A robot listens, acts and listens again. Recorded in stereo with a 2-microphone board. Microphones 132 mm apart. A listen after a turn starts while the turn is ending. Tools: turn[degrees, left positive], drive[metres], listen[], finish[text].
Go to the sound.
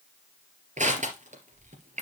Thought: The crushing: about 70° right or 110° right.
Action: turn[-70]
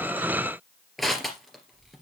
Action: drive[1.0]
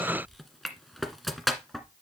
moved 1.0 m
Action: drive[1.0]
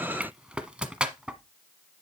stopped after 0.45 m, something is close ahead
Thought: The crushing is now 10° right.
Action: turn[-10]
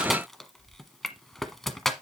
Action: finish[Arrived at the crushing, straight ahead.]